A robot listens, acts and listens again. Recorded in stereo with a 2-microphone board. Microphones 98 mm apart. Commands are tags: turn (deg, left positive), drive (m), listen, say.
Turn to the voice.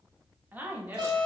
<turn deg="-20"/>
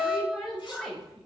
<say>Found it: a woman speaking, straight ahead.</say>